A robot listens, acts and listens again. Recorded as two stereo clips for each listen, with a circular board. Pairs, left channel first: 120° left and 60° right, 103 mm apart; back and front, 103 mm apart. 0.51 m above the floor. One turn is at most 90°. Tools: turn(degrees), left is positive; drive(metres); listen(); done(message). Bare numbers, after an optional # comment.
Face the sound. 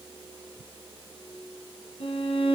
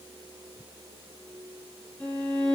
# The violin: 100° left.
turn(90)
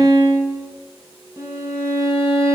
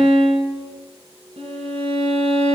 done("Facing the violin, 1 to 2 m away.")